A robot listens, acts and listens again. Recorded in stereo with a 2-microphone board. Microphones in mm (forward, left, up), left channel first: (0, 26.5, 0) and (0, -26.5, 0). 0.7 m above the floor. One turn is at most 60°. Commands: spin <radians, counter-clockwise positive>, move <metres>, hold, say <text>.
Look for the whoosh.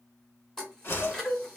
spin 0.87
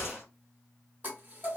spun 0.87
spin 1.05
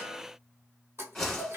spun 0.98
spin 0.26
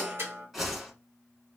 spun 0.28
say Facing the whoosh.